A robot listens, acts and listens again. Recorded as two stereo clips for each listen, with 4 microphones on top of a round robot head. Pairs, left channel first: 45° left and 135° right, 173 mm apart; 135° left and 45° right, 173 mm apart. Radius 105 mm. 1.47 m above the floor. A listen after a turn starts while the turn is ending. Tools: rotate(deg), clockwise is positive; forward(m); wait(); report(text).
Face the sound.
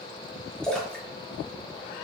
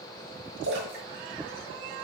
rotate(40)
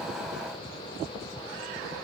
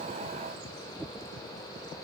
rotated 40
report("Facing where the splash came from. I can't hear it now.")